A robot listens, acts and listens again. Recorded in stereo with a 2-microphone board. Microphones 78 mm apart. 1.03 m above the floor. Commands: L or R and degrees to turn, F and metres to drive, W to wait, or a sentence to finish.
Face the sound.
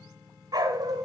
R55
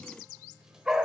Found it: a dog barking, straight ahead.